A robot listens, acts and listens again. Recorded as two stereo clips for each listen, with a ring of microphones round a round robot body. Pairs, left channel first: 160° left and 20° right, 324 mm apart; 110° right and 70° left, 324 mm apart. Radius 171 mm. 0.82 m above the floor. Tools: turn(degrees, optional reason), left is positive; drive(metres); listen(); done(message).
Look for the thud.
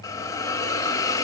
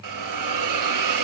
listen()
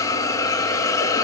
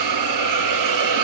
listen()
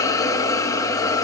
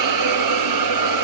done("I can't make out a thud to turn to.")